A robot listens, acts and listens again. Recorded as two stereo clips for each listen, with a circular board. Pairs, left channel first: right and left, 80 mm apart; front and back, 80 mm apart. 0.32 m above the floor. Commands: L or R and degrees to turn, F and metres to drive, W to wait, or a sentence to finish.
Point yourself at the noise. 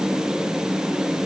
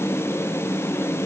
W
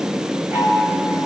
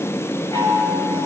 L30
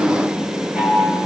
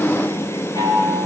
L15
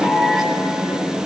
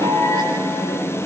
Found it: a chime, straight ahead, over 4 m away.